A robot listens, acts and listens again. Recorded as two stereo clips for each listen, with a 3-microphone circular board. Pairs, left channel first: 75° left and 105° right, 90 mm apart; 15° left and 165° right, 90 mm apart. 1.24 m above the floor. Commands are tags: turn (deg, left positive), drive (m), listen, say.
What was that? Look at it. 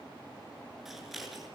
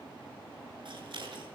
<turn deg="165"/>
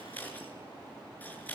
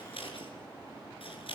<say>Facing the scissors, over 4 m away.</say>